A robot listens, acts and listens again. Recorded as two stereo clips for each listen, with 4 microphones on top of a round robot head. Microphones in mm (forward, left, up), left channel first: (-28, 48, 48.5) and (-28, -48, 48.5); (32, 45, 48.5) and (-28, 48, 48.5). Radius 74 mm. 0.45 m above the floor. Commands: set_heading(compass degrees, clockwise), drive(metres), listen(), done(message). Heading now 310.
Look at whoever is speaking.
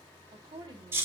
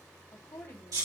set_heading(355)
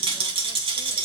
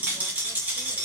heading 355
listen()
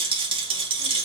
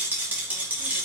listen()
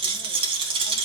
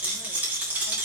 done("Facing where the woman speaking came from. I can't hear it now.")